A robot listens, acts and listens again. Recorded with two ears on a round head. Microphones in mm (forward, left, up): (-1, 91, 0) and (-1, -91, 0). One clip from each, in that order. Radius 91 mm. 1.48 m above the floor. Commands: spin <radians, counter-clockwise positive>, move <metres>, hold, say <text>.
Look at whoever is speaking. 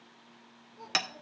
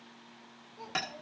spin -0.44
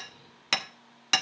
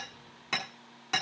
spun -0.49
hold
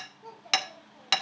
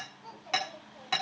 say Facing the child speaking.